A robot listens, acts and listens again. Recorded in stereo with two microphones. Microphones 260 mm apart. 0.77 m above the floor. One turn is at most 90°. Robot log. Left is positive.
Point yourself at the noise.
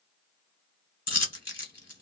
note: The dropped coin: about 70° left or 110° left.
cmd yaw +70
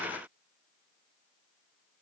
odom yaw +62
cmd idle
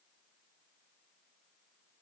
end: I heard a dropped coin, but can't make it out now. It was about 5° left or 50° left.